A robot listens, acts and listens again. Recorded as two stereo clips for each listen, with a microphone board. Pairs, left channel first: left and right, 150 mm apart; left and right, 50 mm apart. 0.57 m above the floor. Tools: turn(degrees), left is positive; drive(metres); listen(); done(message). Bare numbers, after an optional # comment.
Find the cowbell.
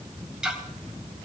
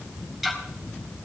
listen()
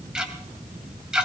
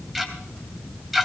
listen()
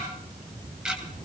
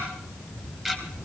done("I can't make out a cowbell to turn to.")